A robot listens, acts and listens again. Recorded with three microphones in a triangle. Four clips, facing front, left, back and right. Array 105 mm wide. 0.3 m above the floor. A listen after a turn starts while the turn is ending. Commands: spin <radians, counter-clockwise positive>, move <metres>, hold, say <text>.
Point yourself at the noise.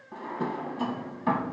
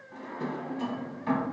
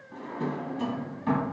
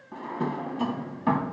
spin -0.96
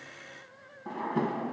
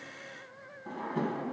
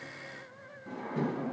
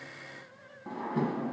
spin -0.17
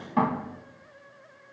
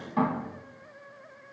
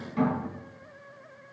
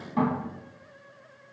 say Facing the drawer.